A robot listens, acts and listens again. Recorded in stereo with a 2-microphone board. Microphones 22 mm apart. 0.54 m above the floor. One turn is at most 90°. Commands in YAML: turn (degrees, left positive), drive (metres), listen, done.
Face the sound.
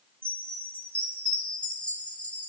turn: 70
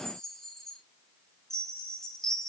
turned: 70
turn: 25
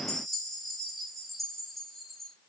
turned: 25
done: "Found it: a chime, straight ahead, 2 to 4 m away."